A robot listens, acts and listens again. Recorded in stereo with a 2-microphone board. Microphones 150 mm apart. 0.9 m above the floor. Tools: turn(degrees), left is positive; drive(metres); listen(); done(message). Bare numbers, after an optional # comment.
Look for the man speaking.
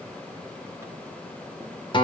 listen()
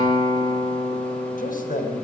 # The man speaking: about 75° left or 105° left.
turn(75)
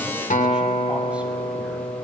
listen()
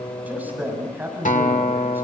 # So it is at 15° right.
turn(-15)
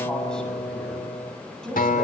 done("Found it: a man speaking, straight ahead.")